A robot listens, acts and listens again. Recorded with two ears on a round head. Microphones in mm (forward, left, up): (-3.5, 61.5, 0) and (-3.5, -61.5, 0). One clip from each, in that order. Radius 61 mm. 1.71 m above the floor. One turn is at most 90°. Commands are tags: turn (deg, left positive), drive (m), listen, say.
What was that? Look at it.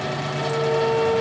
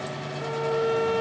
<turn deg="-50"/>
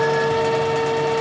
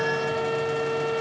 <say>Facing the violin.</say>